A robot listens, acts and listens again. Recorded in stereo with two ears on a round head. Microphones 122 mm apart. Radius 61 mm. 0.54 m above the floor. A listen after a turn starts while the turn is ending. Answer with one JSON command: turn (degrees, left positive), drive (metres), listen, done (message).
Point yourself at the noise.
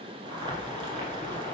{"turn": -40}
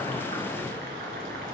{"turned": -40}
{"turn": -105}
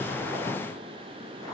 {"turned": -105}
{"listen": true}
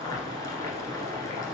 {"turn": 25}
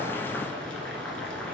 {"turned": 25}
{"turn": 10}
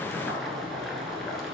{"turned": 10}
{"done": "Facing the boiling, 1 to 2 m away."}